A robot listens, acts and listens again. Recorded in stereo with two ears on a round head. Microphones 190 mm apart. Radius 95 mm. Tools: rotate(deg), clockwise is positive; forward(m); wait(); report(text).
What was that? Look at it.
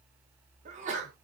rotate(35)
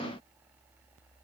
wait()
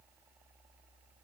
report("I heard a sneeze, but can't make it out now. It was about straight ahead or 110° right.")